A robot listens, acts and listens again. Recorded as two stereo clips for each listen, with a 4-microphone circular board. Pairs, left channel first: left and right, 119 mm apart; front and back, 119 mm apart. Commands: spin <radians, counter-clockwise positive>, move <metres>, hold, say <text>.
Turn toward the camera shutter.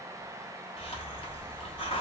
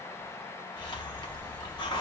hold
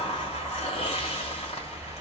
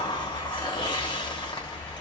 hold
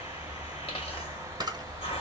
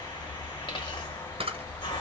spin -2.53
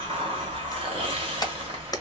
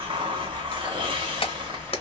spin 0.61
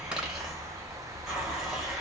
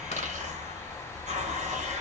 hold
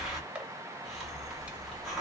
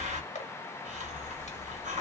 spin -0.17
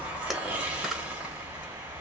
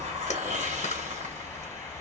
hold
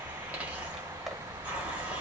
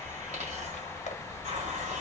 hold
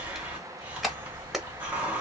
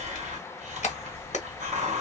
say Facing the camera shutter.